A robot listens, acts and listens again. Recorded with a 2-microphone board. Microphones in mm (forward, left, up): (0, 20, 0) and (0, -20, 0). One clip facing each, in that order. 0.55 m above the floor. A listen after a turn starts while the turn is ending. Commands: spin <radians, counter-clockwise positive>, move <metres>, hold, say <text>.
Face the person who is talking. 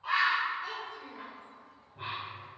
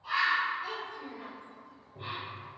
spin 0.52
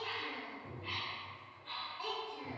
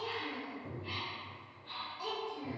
spin 2.62
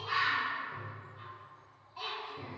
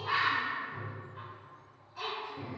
spin 0.44
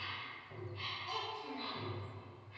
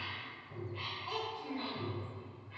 spin -0.44
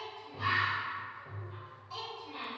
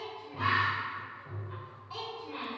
spin -0.35
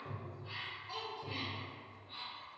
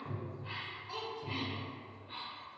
say Found it: a child speaking, straight ahead, 1 to 2 m away.